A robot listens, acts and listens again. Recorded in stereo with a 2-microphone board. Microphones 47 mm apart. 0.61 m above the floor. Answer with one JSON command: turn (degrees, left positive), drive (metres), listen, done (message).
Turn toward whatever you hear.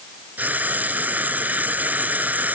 {"turn": -35}
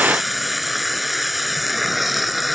{"done": "Facing the frying."}